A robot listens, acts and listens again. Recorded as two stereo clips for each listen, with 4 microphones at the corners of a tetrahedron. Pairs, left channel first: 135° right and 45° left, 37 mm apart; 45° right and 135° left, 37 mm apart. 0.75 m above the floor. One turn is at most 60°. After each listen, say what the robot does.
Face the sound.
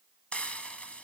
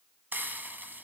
Turn 60° left.
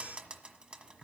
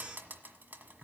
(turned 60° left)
Turn 60° left.
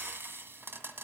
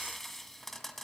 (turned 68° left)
Turn 40° left.
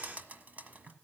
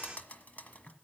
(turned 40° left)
Found it: frying, straight ahead, 1 to 2 m away.